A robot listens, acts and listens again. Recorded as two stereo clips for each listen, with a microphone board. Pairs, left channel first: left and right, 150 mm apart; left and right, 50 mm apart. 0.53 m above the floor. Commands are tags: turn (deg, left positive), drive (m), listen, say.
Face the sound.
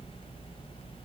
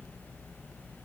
<listen/>
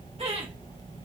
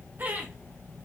<turn deg="-40"/>
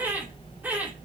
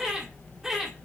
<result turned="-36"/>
<turn deg="-10"/>
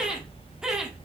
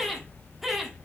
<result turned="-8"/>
<say>Facing the laughter, 1 to 2 m away.</say>